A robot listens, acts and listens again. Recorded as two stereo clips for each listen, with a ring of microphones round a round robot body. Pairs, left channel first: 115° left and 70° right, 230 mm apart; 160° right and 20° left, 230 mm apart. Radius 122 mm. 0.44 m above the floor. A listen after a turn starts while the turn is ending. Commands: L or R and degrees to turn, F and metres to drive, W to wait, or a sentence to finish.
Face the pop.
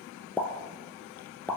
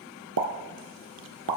L30
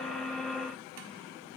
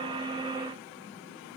I heard a pop from this way, but can't make it out now.